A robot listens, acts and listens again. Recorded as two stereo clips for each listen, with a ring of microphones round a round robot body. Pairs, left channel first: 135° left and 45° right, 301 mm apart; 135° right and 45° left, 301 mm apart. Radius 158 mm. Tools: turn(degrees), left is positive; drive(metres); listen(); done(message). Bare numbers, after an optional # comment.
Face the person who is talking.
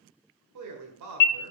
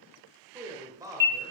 # The man speaking: 35° right.
turn(-35)
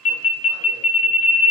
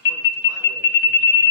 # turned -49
# Nothing new. It was at 15° left.
turn(15)
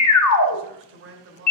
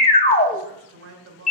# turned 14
done("Facing the man speaking.")